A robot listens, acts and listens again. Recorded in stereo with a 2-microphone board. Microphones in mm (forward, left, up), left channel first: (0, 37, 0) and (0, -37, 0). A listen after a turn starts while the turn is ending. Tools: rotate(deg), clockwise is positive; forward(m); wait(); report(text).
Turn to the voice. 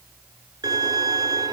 wait()
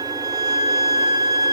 wait()
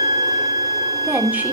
rotate(25)
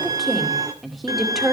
report("Found it: a woman speaking, straight ahead, 2 to 4 m away.")